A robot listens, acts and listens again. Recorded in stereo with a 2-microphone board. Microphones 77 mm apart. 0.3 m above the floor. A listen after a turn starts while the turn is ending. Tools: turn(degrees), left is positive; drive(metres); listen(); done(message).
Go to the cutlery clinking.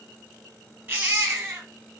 listen()
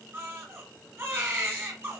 listen()
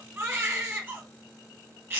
done("I can't make out cutlery clinking to turn to.")